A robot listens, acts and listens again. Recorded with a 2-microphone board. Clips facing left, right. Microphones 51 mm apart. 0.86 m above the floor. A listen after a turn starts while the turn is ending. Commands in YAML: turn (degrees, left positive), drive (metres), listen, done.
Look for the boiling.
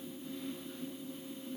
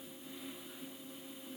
listen: true
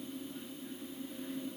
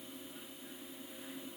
listen: true
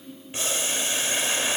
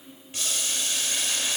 turn: 25
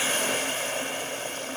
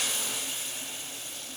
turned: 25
turn: 130
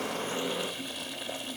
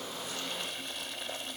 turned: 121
done: "Found it: boiling, straight ahead."